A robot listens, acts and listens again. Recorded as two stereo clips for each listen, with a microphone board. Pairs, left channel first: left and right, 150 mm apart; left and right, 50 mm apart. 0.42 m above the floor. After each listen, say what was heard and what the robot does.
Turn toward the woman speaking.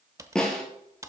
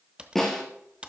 Keep listening.
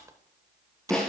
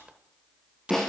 Keep listening.
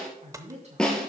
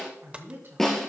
The woman speaking: about 50° right or 130° right. Turn 50° right.
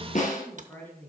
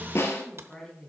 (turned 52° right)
So it is at 15° left. Turn 15° left.
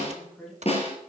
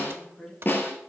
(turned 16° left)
Found it: a woman speaking, straight ahead, 2 to 4 m away.